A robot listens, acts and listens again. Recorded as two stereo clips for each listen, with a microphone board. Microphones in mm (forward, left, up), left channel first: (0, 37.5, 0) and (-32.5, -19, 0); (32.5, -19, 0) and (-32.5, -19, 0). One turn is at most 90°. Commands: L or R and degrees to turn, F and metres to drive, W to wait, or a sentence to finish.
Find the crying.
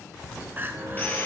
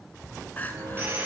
R65
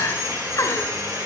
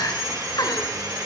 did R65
L20
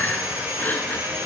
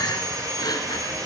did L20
Facing the crying, 1 to 2 m away.